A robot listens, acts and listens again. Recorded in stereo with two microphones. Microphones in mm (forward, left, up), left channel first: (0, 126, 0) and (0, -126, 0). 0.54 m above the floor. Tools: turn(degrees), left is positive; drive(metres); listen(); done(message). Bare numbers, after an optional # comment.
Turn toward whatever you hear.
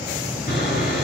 # The sawing: about 40° left or 140° left.
turn(40)
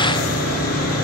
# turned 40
# So it is at 105° left.
turn(105)
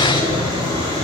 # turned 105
# The sawing is now 20° right.
turn(-20)
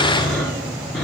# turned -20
done("Found it: sawing, straight ahead.")